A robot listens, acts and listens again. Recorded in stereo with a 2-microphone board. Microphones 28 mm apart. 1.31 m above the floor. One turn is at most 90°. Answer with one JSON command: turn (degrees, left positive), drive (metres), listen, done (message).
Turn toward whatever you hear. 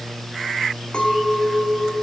{"turn": 45}
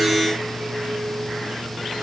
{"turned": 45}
{"listen": true}
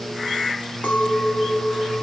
{"turn": 90}
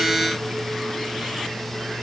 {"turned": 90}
{"listen": true}
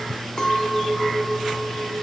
{"turn": 30}
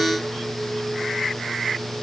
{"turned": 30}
{"listen": true}
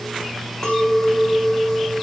{"turn": 15}
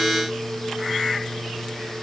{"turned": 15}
{"listen": true}
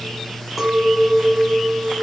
{"done": "Found it: a clink, straight ahead."}